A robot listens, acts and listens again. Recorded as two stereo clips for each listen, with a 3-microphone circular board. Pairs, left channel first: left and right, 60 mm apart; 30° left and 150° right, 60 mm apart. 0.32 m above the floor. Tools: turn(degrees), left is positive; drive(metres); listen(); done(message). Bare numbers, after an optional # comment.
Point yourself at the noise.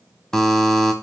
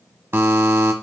# The buzzer: 170° left.
turn(170)
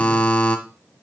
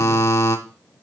# The buzzer is now 25° left.
turn(25)
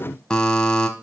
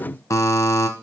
# The buzzer is now 15° left.
turn(15)
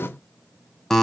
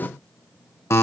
done("Found it: a buzzer, straight ahead, 1 to 2 m away.")